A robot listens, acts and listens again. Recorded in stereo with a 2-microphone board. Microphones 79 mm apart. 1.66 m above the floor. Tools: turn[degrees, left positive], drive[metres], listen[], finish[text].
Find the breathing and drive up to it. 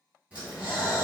Thought: The breathing: about 20° right or 160° right.
Action: turn[-20]
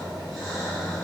Action: drive[1.0]
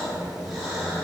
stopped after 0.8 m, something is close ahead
Action: finish[I am next to the breathing.]